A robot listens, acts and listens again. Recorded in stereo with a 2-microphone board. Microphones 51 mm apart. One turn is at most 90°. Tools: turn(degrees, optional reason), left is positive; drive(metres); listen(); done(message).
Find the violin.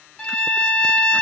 turn(degrees=20, reason="The violin: about 20° left or 160° left.")
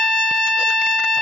done("Found it: a violin, straight ahead.")